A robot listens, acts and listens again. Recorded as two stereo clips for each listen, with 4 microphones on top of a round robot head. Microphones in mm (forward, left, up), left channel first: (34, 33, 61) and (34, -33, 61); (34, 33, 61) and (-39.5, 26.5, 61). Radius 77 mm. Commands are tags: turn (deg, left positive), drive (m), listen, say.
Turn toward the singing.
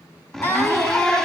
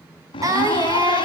<turn deg="145"/>
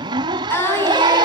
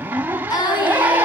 <turn deg="35"/>
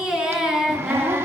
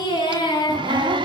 <turn deg="-10"/>
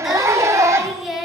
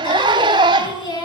<say>Found it: singing, straight ahead, over 4 m away.</say>